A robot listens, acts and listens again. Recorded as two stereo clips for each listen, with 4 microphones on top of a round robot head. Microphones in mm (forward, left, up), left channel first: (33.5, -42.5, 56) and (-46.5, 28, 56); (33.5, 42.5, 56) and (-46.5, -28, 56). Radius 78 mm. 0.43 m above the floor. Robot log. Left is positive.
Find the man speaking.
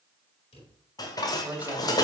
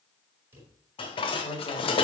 note: The man speaking: 65° left.
cmd yaw +65
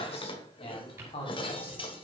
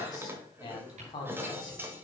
note: The man speaking is now 10° right.
cmd yaw -10
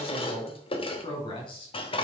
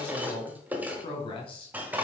end: Facing the man speaking.